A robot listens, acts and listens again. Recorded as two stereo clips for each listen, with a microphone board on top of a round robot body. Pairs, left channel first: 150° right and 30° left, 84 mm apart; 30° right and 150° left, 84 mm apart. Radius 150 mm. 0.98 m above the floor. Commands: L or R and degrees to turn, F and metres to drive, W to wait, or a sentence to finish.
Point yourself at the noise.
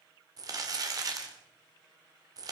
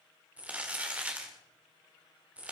L75
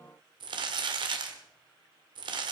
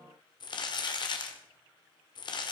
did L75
Facing the crumpling.